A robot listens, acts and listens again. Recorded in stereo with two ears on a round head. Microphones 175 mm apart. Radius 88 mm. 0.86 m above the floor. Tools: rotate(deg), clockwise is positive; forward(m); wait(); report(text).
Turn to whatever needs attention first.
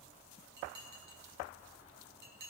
wait()
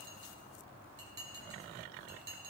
wait()
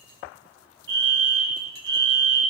rotate(65)
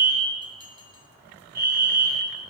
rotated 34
rotate(55)
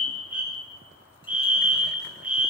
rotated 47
rotate(10)
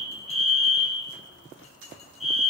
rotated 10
report("Found it: a fire alarm, straight ahead.")